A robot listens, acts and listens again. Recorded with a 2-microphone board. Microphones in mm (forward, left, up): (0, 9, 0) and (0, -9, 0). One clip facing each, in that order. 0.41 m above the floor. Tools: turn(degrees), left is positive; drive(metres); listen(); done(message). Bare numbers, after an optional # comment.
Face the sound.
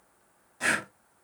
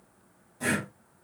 # The breathing: about 40° left or 140° left.
turn(40)
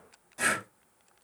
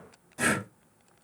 done("Facing the breathing, under 1 m away.")